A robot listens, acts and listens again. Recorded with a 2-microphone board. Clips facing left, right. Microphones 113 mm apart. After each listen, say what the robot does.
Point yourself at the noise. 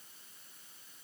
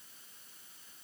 Keep listening.
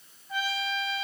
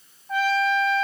Turn 65° right.
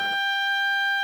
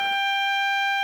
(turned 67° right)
Found it: a trumpet, straight ahead.